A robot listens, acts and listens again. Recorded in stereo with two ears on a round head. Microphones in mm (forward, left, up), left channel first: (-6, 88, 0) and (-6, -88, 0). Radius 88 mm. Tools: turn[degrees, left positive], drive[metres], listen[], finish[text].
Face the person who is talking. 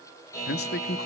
Thought: The man speaking: about 55° left or 125° left.
Action: turn[55]
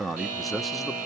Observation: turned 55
Action: finish[Found it: a man speaking, straight ahead, under 1 m away.]